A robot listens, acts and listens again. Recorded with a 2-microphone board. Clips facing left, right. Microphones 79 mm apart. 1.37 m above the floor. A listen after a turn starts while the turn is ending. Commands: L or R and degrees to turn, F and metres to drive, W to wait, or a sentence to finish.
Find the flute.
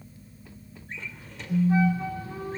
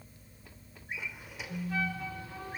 L30
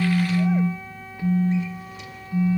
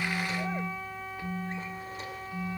Facing the flute, over 4 m away.